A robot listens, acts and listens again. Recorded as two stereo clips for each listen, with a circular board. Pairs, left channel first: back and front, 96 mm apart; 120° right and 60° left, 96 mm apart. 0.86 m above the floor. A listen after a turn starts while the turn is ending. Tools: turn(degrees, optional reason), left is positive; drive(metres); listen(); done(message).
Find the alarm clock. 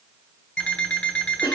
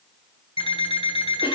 turn(degrees=-105, reason="The alarm clock: 105° right.")
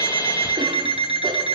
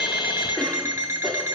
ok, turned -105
done("Found it: an alarm clock, straight ahead, 2 to 4 m away.")